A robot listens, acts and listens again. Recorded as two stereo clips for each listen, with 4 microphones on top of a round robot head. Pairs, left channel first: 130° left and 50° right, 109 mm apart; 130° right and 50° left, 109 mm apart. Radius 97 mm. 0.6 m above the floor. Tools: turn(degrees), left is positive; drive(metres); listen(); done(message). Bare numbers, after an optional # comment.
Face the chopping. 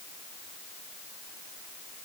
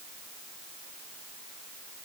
listen()
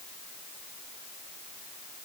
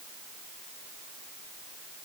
listen()
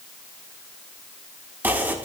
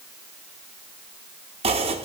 # The chopping: 25° left.
turn(25)
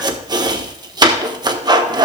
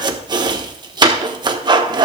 done("Facing the chopping, 1 to 2 m away.")